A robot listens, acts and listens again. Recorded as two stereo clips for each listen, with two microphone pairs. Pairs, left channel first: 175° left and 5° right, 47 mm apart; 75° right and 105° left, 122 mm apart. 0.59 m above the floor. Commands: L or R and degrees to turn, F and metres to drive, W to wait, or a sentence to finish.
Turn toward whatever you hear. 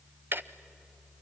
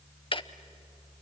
R35
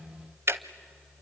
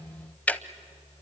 Facing the ticking.